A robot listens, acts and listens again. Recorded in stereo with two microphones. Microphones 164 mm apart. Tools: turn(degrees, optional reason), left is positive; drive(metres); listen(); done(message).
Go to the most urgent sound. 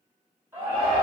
turn(degrees=-15, reason="The shout: about 15° right or 165° right.")
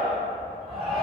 drive(metres=1.0)
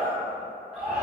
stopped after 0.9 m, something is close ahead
done("I am next to the shout.")